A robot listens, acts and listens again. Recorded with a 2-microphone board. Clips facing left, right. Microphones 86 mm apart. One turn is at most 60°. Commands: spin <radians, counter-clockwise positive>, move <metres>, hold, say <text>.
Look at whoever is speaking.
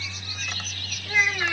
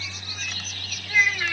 spin 0.35
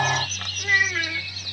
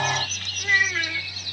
say Facing the child speaking.